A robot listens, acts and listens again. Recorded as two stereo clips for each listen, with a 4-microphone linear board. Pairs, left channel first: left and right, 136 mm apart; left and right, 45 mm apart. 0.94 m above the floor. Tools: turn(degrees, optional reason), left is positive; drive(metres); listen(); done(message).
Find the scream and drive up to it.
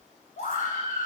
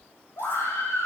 turn(degrees=90)
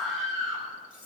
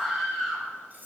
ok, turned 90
drive(metres=1.0)
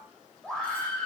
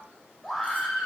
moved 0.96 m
drive(metres=1.0)
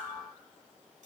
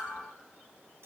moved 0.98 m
listen()
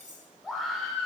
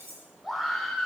drive(metres=1.0)
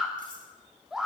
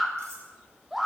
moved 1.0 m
drive(metres=1.0)
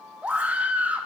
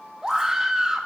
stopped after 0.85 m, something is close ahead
turn(degrees=-10, reason="The scream is now 10° right.")
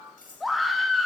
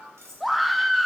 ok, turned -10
done("Arrived at the scream, straight ahead.")